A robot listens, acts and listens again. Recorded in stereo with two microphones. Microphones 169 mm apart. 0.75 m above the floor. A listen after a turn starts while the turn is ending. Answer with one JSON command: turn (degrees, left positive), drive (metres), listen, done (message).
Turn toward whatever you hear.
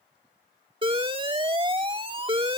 {"turn": -30}
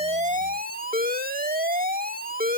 {"turn": -115}
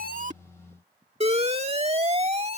{"turn": -40}
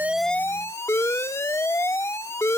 {"turn": 15}
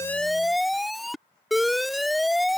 {"done": "Facing the alarm."}